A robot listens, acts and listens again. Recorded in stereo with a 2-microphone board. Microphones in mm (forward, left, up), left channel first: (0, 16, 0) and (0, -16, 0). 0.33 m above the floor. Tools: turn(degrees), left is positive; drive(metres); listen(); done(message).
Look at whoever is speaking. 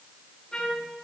listen()
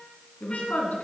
turn(degrees=60)
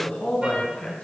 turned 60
turn(degrees=55)
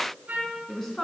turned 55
turn(degrees=15)
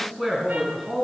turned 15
done("Found it: a woman speaking, straight ahead, 2 to 4 m away.")